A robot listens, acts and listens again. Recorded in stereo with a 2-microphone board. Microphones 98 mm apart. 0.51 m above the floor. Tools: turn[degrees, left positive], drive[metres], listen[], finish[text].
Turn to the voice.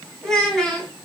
Action: turn[30]
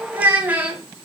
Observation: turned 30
Thought: So it is at 15° right.
Action: turn[-15]
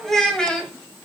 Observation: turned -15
Thought: The child speaking is now 10° left.
Action: turn[10]
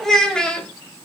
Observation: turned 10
Thought: The child speaking is now 10° left.
Action: turn[10]
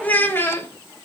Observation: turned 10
Thought: The child speaking is now 25° left.
Action: turn[25]
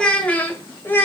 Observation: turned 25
Thought: The child speaking is now 20° left.
Action: turn[20]
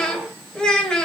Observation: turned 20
Thought: The child speaking is now 10° left.
Action: turn[10]
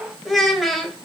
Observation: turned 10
Action: finish[Found it: a child speaking, straight ahead, 1 to 2 m away.]